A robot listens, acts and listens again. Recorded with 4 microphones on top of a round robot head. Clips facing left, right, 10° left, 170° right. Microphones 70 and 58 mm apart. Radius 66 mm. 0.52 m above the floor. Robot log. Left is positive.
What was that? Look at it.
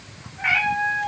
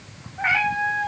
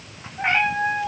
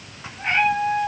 note: The cat meowing: 30° right.
cmd yaw -30
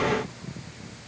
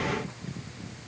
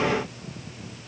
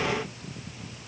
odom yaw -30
cmd idle
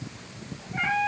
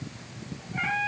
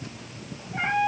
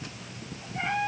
note: The cat meowing is now 15° left.
cmd yaw +15
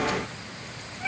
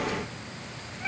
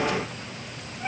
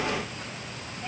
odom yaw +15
cmd idle
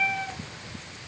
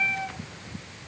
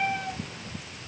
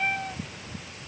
end: Facing the cat meowing, over 4 m away.